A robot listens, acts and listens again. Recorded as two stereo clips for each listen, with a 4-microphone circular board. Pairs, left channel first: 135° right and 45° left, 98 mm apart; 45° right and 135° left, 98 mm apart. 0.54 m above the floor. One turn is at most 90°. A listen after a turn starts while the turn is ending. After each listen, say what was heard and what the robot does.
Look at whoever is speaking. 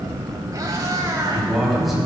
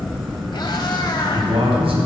The man speaking: 135° left. Turn 90° left.
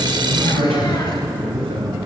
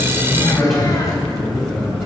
The man speaking is now 45° left. Turn 45° left.
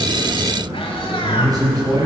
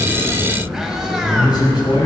Found it: a man speaking, straight ahead, over 4 m away.